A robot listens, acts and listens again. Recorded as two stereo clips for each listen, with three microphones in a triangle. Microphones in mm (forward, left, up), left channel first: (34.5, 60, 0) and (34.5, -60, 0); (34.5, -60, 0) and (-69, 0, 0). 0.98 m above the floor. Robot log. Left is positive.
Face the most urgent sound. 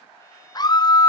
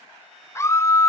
note: The scream: 35° left.
cmd yaw +35
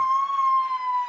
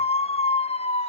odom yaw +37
end: Facing the scream.